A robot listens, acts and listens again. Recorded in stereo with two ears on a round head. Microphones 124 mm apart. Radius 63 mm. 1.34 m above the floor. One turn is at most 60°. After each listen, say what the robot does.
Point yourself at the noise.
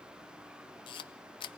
Turn 35° left.
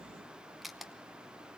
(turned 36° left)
Found it: a camera shutter, straight ahead.